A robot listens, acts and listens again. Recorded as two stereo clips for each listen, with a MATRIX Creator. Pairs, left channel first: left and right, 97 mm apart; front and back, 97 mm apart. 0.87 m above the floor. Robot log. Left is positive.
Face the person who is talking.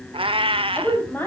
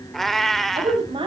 note: The woman speaking: 160° left.
cmd yaw +160
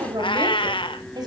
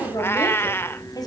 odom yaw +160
note: The woman speaking is now 50° right.
cmd yaw -50
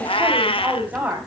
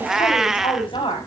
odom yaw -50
note: The woman speaking is now 20° right.
cmd yaw -20
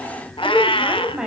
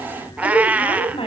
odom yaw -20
note: The woman speaking is now 10° right.
cmd yaw -10
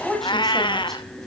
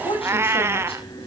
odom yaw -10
end: Facing the woman speaking.